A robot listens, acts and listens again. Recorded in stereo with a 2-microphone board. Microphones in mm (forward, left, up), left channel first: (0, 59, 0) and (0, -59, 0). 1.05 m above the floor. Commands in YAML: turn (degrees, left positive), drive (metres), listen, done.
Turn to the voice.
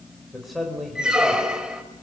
turn: 30
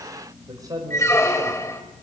turn: -30
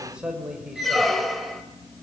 turn: -10
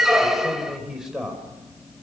done: "Found it: a man speaking, straight ahead."